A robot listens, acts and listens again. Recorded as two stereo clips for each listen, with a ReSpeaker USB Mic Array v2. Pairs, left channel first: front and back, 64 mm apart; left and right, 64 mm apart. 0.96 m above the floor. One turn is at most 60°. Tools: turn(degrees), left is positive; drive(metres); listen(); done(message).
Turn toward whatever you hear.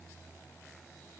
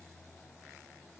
listen()
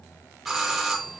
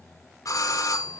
turn(degrees=60)
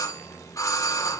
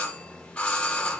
turn(degrees=20)
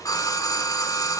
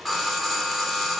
done("Facing the doorbell, 1 to 2 m away.")